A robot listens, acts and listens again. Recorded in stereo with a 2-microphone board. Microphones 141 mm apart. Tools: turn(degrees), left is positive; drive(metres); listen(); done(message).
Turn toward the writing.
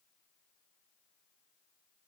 listen()
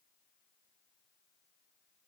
listen()
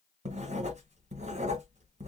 turn(degrees=-55)
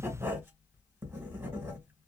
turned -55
turn(degrees=-20)
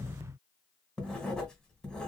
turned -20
done("Found it: writing, straight ahead.")